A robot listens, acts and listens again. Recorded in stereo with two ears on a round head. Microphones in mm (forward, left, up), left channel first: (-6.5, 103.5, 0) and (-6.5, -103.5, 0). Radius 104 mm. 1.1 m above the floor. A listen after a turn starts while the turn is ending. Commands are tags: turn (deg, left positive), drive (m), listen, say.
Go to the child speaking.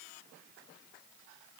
<listen/>
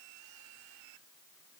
<listen/>
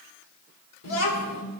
<turn deg="90"/>
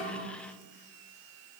<listen/>
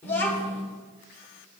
<turn deg="10"/>
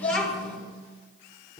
<drive m="1.0"/>
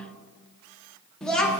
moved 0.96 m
<drive m="1.0"/>
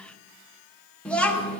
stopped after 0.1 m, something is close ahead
<say>Arrived at the child speaking, straight ahead.</say>